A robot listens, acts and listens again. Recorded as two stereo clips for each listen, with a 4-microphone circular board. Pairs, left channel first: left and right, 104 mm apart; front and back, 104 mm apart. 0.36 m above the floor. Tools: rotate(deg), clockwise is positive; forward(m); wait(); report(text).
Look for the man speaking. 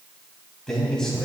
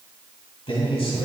report("Found it: a man speaking, straight ahead, 2 to 4 m away.")